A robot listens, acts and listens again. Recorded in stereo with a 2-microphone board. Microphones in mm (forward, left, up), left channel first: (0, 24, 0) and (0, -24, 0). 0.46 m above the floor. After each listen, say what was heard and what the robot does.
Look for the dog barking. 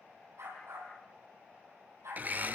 Turn 90° right.
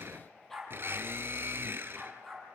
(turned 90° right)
Found it: a dog barking, straight ahead.